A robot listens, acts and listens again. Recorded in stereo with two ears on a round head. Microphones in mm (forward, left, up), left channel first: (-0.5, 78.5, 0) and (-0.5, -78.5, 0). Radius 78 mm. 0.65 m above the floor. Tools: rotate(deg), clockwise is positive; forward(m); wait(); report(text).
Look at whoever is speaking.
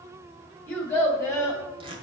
rotate(-15)
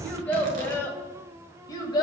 rotate(-25)
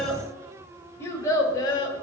rotate(-25)
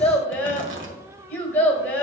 rotate(-30)
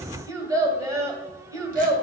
rotate(20)
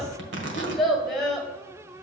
report("Facing the child speaking, 1 to 2 m away.")